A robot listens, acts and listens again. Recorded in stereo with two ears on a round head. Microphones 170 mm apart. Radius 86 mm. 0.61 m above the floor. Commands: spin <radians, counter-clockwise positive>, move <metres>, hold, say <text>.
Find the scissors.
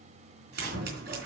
spin -0.96
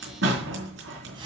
spin -1.22
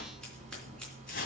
say Found it: scissors, straight ahead, 2 to 4 m away.